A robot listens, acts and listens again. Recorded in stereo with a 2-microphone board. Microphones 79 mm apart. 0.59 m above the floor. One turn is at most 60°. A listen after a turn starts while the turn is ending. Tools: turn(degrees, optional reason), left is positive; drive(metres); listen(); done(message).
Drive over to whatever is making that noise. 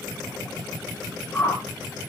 turn(degrees=25, reason="The whoosh: about 25° left or 155° left.")
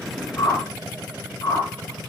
turn(degrees=60, reason="So it is at 130° left.")
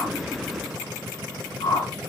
turn(degrees=60, reason="The whoosh is now 75° left.")
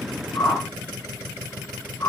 turn(degrees=40, reason="The whoosh is now 40° left.")
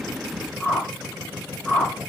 drive(metres=1.0)
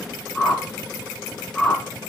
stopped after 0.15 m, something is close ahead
turn(degrees=10, reason="The whoosh is now 10° left.")
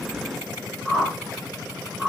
done("Something is in my way. I am facing the whoosh but have not reached it.")